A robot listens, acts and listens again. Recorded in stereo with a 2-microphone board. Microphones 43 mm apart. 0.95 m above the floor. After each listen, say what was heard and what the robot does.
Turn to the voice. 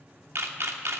Keep listening.
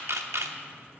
Keep listening.
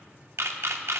I can't make out anyone speaking to turn to.